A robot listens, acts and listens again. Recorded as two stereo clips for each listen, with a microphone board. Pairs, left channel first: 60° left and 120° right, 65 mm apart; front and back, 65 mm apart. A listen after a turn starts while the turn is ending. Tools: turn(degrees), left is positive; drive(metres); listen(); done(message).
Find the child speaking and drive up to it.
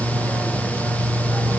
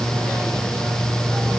listen()
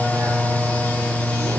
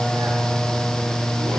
listen()
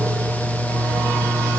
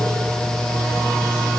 done("I can't make out a child speaking to turn to.")